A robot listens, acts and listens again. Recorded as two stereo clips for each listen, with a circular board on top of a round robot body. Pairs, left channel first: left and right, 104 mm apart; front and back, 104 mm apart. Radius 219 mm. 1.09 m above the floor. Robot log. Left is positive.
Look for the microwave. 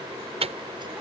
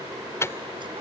note: The microwave: 65° right.
cmd yaw -65
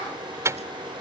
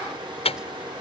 note: The microwave is now 25° right.
cmd yaw -25
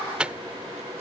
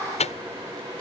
note: The microwave is now 10° right.
cmd yaw -10
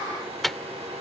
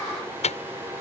end: Facing the microwave.